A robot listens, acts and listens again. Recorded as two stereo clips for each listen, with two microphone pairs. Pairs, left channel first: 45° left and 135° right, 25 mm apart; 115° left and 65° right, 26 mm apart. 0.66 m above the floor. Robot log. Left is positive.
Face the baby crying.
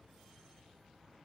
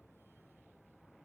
cmd idle
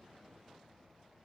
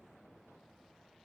cmd idle
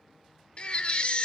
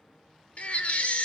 note: The baby crying: 85° left.
cmd yaw +85
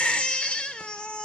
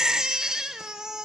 end: Facing the baby crying.